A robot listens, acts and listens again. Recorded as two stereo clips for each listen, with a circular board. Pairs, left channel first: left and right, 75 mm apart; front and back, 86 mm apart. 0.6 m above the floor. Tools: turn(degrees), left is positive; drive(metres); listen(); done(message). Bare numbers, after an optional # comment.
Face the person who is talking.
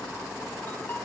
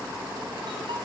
listen()
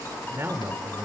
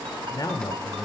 # The man speaking: 35° right.
turn(-35)
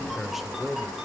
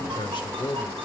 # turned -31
done("Found it: a man speaking, straight ahead, 1 to 2 m away.")